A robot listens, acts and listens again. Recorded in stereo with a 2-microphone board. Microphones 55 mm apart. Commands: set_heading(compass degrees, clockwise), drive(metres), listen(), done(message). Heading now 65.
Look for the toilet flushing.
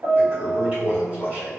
set_heading(95)
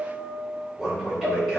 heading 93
done("Facing the toilet flushing, 2 to 4 m away.")